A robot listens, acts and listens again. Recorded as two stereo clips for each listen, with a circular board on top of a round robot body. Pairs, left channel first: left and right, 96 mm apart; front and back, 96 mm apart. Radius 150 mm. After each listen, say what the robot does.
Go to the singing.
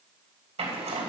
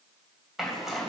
Keep listening.
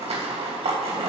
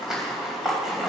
Keep listening.
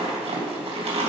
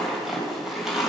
I can't make out singing to turn to.